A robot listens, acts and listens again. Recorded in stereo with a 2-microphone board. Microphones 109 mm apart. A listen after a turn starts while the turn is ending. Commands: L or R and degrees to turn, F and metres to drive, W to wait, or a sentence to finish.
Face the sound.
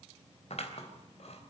L70
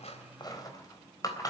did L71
L35
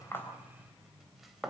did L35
Found it: scissors, straight ahead.